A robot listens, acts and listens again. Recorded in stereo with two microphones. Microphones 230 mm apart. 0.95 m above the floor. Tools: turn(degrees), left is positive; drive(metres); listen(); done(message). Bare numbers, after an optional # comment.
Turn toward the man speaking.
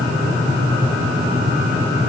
listen()
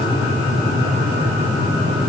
listen()
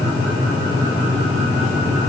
done("I can't make out a man speaking.")